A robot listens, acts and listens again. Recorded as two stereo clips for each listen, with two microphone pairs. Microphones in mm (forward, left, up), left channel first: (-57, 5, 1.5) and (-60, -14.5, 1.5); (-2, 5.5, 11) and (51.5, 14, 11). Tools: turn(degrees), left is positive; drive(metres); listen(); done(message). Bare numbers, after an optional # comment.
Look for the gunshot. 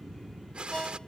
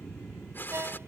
# The gunshot: 130° right.
turn(-130)
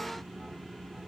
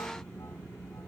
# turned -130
done("Facing where the gunshot came from. I can't hear it now.")